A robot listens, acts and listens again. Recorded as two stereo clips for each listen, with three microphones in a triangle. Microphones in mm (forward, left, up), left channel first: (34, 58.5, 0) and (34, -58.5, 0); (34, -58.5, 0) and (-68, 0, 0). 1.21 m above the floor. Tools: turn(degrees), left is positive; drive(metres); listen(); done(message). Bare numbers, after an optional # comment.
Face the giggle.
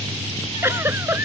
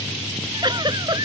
# The giggle: 160° right.
turn(-160)
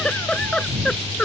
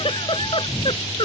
# The giggle is now 10° left.
turn(10)
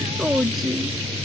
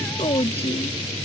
done("Found it: a giggle, straight ahead.")